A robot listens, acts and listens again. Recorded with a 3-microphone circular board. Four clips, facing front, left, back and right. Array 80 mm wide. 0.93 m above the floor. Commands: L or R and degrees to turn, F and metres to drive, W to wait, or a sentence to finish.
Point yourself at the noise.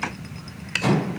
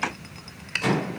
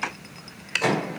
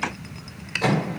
R140
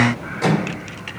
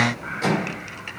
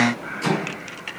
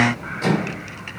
Facing the microwave, 2 to 4 m away.